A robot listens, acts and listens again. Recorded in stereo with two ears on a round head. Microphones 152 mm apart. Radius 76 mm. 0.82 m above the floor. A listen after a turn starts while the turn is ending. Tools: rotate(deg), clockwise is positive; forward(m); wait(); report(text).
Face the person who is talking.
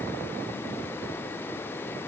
wait()
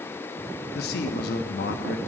rotate(-65)
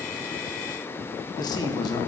rotate(-25)
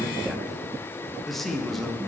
report("Found it: a man speaking, straight ahead, 1 to 2 m away.")